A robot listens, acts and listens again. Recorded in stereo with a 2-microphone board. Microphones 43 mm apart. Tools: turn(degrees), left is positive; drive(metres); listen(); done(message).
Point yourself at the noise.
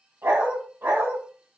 turn(degrees=-70)
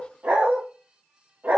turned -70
turn(degrees=-45)
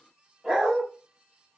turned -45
turn(degrees=-10)
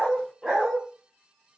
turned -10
turn(degrees=-10)
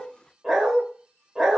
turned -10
done("Found it: a dog barking, straight ahead, 1 to 2 m away.")